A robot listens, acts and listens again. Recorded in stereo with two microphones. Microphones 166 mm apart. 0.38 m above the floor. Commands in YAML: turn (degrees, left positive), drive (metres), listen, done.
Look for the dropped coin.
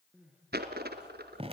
turn: -70
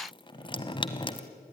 listen: true
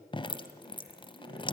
done: "I heard a dropped coin, but can't make it out now. It was about straight ahead or 40° right."